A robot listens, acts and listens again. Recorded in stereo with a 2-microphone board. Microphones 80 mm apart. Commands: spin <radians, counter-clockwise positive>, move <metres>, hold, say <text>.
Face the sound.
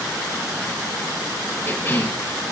spin 0.52
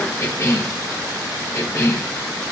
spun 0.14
spin 0.70
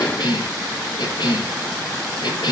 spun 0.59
spin 1.92
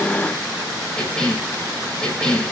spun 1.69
spin 0.17
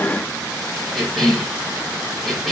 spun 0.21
say Facing the cough.